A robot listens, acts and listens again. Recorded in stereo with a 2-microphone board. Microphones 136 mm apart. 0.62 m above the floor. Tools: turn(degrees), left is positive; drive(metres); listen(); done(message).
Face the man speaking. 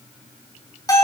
listen()
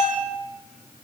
listen()
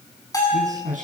turn(degrees=-70)
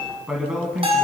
done("Facing the man speaking, over 4 m away.")